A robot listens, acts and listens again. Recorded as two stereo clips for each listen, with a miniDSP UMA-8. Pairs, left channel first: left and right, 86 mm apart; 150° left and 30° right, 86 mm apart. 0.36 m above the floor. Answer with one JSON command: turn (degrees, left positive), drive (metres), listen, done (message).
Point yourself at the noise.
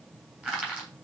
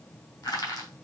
{"turn": -170}
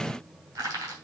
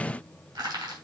{"turn": -40}
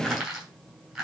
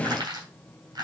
{"done": "Facing the crushing, 2 to 4 m away."}